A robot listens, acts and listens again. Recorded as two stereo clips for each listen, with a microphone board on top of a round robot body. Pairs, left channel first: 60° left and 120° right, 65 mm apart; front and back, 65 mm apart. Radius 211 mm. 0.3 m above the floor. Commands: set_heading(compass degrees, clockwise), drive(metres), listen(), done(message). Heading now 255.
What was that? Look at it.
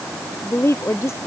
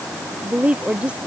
set_heading(145)
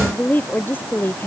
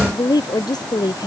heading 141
done("Found it: a woman speaking, straight ahead.")